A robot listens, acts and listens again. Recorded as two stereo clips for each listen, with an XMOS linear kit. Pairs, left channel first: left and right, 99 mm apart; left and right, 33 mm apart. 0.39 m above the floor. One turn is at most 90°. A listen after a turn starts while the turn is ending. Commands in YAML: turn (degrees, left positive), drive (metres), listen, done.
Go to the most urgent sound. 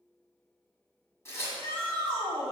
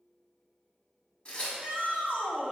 turn: -40
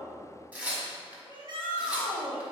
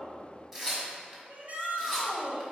turn: -85
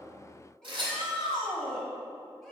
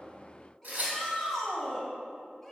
drive: 1.0
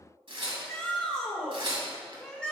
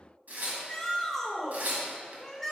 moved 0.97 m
turn: 15
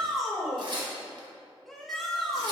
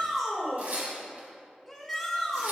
drive: 1.0
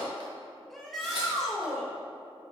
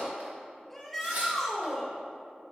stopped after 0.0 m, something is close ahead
done: "I am next to the shout."